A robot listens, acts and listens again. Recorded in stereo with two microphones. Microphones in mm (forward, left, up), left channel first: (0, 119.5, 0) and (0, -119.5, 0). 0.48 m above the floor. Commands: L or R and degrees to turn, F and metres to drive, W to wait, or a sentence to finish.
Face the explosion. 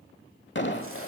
L50
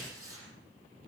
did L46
W
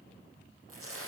I heard an explosion, but can't make it out now. It was about 5° left or 85° left.